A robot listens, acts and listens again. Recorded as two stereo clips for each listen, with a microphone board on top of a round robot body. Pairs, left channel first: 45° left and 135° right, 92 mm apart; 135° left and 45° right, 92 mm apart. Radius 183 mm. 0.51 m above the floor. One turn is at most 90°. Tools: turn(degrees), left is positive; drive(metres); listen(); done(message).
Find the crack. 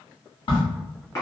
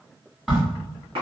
turn(degrees=40)
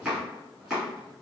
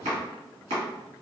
done("I heard a crack from this way, but can't make it out now.")